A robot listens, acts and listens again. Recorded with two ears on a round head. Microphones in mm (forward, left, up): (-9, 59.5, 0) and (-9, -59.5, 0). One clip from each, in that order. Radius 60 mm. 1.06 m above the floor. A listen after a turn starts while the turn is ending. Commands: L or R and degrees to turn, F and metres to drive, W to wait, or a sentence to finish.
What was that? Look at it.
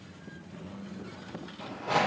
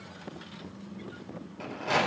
R70
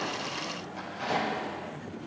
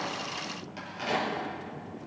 R40
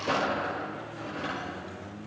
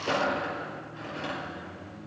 R20
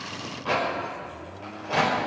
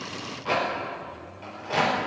Found it: a rattle, straight ahead.